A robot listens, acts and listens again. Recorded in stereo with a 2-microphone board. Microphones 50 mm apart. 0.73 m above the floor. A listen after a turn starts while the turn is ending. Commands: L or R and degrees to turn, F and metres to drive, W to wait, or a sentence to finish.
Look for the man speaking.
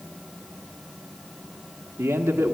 R65
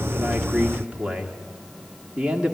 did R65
R30
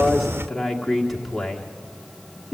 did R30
Found it: a man speaking, straight ahead, 1 to 2 m away.